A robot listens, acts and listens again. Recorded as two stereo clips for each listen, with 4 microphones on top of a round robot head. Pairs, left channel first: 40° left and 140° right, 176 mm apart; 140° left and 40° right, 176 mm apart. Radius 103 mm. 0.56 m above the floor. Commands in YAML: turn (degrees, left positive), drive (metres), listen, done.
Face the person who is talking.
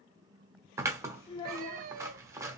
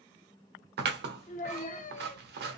turn: 100
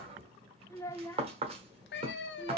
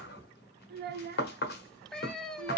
turn: -30
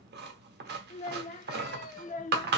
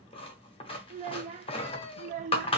done: "Found it: a child speaking, straight ahead, under 1 m away."